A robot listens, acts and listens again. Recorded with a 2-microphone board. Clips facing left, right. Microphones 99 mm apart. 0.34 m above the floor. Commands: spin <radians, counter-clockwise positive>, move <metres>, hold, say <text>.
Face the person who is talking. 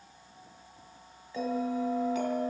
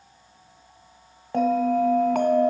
hold
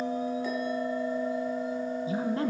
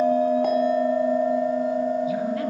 spin 0.52
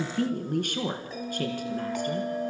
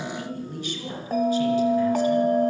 spin 2.18
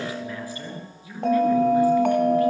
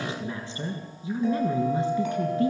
spin -0.44
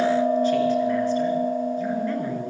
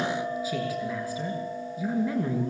say Facing the woman speaking.